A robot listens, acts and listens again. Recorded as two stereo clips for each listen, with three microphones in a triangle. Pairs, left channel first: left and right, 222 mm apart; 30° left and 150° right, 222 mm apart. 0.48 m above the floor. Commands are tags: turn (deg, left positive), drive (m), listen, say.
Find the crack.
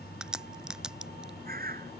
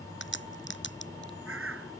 <say>Found it: a crack, straight ahead.</say>